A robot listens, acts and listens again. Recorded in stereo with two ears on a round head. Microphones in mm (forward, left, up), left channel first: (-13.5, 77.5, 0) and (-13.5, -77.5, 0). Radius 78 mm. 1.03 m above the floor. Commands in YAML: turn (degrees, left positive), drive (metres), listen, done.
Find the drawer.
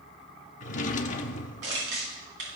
turn: 45
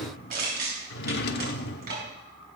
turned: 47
turn: 80
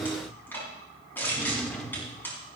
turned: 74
done: "Found it: a drawer, straight ahead, 1 to 2 m away."